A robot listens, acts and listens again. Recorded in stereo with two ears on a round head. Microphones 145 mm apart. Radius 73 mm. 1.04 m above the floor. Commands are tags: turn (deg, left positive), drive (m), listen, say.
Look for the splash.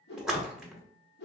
<turn deg="-30"/>
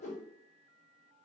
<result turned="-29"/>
<listen/>
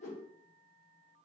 <say>I heard a splash, but can't make it out now. It was about 25° left or 150° right.</say>